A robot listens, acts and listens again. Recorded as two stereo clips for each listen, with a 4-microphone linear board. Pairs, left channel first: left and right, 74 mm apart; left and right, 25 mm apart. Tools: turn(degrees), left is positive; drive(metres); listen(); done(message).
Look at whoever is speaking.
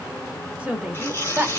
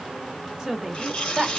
turn(degrees=-20)
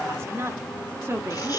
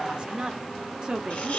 turn(degrees=-35)
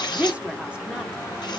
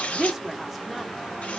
turn(degrees=-15)
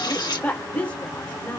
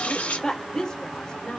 turn(degrees=20)
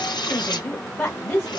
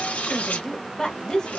turn(degrees=20)
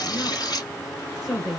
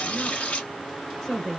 done("Found it: a woman speaking, straight ahead.")